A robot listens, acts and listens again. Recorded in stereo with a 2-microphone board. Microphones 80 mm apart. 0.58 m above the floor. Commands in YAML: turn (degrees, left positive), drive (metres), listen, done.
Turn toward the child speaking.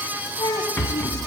turn: 90
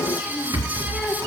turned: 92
listen: true
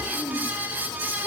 done: "Found it: a child speaking, straight ahead, over 4 m away."